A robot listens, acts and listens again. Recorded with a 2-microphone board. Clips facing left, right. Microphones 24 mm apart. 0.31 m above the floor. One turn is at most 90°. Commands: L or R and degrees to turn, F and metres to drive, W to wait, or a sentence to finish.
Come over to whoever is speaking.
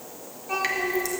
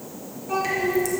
L30
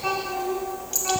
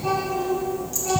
L90
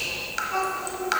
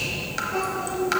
L45
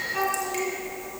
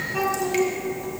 F1.0
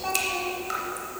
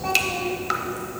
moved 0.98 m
F1.0
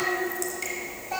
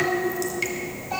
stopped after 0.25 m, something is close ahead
Arrived at the child speaking, straight ahead.